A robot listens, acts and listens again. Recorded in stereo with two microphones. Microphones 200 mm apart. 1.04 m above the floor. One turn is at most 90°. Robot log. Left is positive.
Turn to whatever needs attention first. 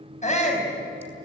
note: The shout: about 35° left or 145° left.
cmd yaw +35
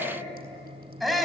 end: Found it: a shout, straight ahead.